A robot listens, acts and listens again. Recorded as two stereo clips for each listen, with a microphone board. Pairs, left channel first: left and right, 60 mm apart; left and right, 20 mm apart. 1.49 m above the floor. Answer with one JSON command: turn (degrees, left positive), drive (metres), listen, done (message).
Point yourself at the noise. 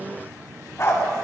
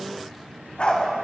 {"turn": 60}
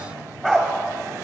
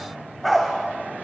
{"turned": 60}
{"done": "Facing the dog barking."}